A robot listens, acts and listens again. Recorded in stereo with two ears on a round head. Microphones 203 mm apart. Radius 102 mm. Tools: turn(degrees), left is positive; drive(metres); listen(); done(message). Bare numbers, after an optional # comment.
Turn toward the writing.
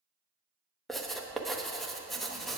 turn(30)
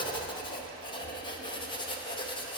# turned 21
# So it is at 160° left.
turn(160)
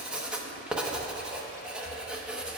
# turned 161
done("Facing the writing, under 1 m away.")